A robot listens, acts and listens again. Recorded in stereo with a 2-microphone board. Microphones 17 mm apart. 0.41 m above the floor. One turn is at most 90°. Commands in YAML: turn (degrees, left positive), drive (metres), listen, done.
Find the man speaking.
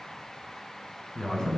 turn: 45
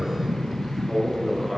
done: "Found it: a man speaking, straight ahead."